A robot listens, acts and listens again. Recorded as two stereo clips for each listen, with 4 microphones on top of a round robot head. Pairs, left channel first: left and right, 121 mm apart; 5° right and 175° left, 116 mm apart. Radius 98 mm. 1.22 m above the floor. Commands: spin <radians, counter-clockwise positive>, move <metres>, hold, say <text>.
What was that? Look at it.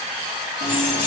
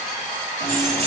spin 1.05
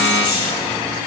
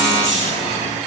spin 0.26
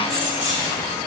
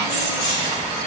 spin 0.17
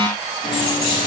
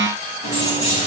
spin 0.17
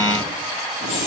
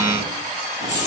say Found it: keys jangling, straight ahead.